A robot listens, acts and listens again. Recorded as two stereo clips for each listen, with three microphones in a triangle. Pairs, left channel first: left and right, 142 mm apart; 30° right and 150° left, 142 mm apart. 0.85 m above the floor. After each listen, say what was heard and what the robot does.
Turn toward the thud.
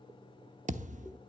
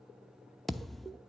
The thud: 120° right. Turn 120° right.
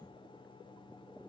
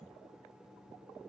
I heard a thud from this way, but can't make it out now.